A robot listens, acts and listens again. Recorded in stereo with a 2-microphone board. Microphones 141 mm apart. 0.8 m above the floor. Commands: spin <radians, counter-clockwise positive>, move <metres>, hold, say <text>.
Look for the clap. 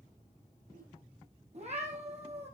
hold
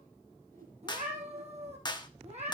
spin 0.52
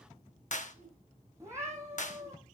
spin 2.09
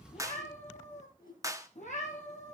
spin -0.44
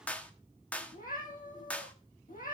spin 0.17
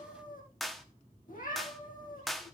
say Facing the clap, 1 to 2 m away.